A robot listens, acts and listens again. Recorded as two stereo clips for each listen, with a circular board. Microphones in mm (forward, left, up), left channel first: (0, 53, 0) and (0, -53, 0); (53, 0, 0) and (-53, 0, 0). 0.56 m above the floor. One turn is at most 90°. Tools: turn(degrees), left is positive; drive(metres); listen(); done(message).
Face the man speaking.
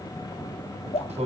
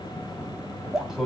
turn(degrees=-90)
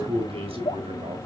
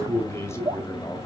turn(degrees=-65)
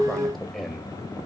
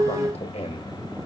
done("Facing the man speaking, 2 to 4 m away.")